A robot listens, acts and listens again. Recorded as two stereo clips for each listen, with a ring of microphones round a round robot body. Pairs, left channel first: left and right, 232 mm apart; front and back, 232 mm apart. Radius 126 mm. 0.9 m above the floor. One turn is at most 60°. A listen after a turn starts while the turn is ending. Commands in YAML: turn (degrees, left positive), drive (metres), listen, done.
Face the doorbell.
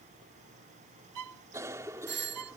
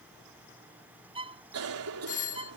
turn: -55
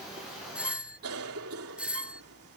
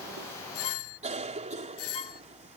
done: "Found it: a doorbell, straight ahead."